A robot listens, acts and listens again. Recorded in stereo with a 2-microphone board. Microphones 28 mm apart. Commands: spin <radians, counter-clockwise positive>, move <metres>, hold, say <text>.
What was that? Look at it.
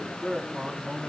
spin 0.52
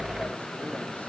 hold
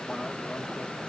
hold
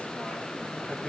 say I heard a man speaking, but can't make it out now. It was about straight ahead or 120° left.